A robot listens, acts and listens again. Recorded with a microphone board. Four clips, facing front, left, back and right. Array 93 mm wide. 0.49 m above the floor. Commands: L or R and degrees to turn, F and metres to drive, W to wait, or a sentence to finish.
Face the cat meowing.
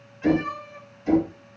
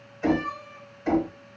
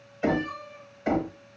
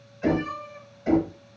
R25
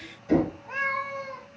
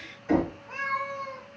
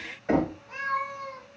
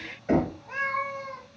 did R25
R35
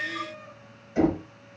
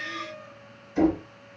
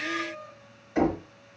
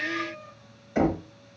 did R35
Found it: a cat meowing, straight ahead, 1 to 2 m away.